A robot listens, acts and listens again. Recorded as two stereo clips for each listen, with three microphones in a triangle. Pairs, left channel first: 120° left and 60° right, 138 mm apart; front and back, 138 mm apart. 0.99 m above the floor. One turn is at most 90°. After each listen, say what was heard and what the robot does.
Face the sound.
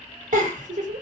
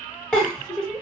The giggle: 80° right. Turn 80° right.
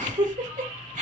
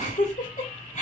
The giggle is now 30° right. Turn 30° right.
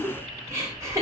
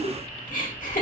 The giggle is now 10° left. Turn 10° left.
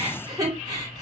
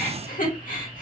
Facing the giggle.